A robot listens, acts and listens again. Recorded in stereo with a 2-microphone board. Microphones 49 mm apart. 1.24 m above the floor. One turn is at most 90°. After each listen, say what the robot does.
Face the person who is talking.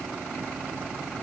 Keep listening.
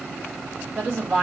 Turn 35° right.
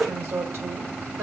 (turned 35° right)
Turn 90° right.
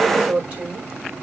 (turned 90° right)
Turn 25° right.
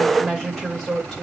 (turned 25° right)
Facing the woman speaking, over 4 m away.